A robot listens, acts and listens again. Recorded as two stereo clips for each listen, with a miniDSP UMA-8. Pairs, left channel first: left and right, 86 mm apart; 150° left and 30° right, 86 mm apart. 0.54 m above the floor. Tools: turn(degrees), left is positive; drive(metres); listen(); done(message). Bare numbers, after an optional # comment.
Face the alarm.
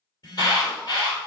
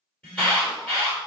# The alarm: 75° left.
turn(75)
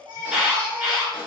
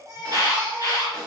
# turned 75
done("Facing the alarm, 1 to 2 m away.")